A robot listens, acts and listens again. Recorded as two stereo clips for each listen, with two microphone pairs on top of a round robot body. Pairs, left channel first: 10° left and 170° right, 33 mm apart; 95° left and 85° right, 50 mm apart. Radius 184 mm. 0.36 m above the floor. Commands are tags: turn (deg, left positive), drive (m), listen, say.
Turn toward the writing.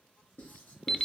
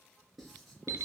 <say>Found it: writing, straight ahead, 2 to 4 m away.</say>